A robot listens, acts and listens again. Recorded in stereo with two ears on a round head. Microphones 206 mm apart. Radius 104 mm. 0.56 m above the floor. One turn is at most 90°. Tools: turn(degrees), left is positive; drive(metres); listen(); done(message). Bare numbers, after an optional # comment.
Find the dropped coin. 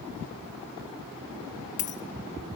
# The dropped coin: about 35° left or 145° left.
turn(35)
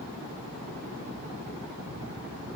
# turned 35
listen()
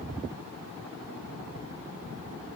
done("I heard a dropped coin, but can't make it out now. It was about straight ahead or 110° left.")